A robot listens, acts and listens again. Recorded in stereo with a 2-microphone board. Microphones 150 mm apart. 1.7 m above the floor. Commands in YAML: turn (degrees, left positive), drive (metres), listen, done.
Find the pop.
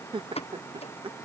turn: 40
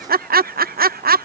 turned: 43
listen: true
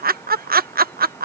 done: "I heard a pop, but can't make it out now. It was about straight ahead or 95° left."